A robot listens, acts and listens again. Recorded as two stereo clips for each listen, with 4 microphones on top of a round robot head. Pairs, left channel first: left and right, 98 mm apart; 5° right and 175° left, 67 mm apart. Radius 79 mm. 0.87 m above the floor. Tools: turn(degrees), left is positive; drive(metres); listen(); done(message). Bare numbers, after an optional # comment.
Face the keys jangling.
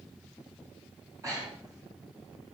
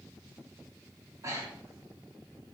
listen()
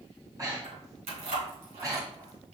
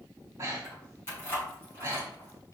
# The keys jangling: 65° right.
turn(-65)
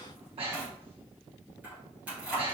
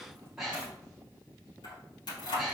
# The keys jangling is now 10° right.
turn(-10)
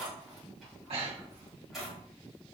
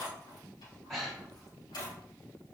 done("Facing the keys jangling, over 4 m away.")